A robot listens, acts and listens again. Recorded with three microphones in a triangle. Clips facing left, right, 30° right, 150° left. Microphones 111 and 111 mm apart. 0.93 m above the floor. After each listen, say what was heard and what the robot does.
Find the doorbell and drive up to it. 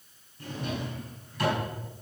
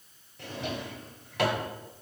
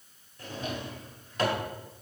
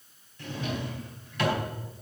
Keep listening.
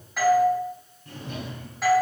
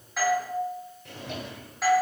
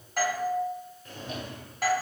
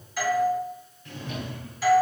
Drive 1.0 m forward.
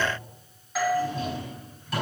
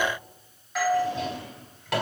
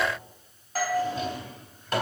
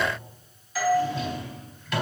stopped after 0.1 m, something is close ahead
Blocked. The doorbell is further on, straight ahead.